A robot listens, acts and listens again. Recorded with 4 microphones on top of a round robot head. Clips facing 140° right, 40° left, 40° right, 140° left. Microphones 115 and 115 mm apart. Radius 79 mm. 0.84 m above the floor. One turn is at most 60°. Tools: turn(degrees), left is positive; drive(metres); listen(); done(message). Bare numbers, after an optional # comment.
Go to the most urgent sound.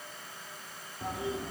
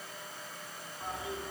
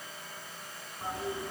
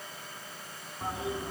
listen()
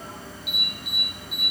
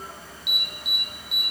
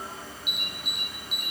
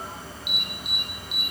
# The alarm: 10° left.
turn(10)
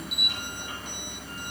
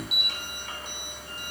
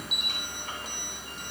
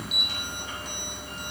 drive(1.0)
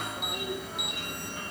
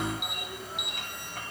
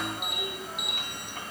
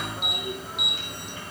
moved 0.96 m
drive(1.0)
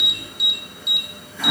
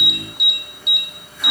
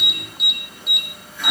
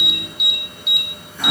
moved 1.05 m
# The alarm is now 10° left.
turn(10)
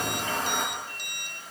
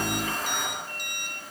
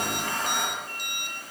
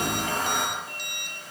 listen()
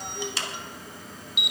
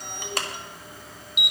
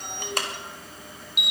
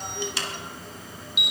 drive(1.0)
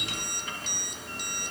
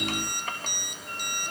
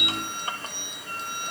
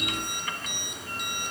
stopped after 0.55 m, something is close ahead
listen()
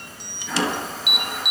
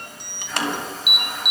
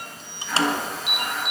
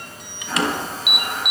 # The alarm is now 15° left.
turn(15)
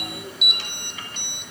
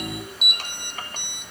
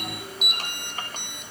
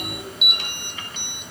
done("Arrived at the alarm, straight ahead.")